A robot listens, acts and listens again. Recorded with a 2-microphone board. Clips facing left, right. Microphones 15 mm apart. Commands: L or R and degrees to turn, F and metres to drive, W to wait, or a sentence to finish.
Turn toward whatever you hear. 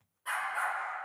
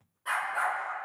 R30
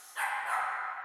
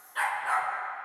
R160
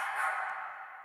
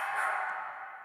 R20
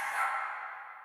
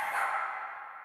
Found it: a dog barking, straight ahead.